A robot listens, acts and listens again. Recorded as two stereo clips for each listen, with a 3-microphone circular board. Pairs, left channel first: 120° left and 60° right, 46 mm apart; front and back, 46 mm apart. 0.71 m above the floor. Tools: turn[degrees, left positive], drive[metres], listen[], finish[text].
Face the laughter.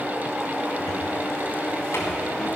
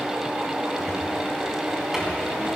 Action: listen[]
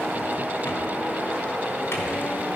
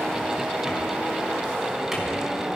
Action: listen[]
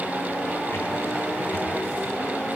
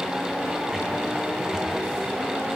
Action: finish[I can't make out laughter, only a cupboard door.]